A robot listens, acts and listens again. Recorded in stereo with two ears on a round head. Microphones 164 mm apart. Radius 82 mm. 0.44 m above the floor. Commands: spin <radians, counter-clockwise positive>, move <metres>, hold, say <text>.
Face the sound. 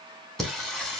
spin 0.52
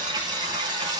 spin -0.35
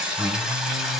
say Found it: singing, straight ahead, 2 to 4 m away.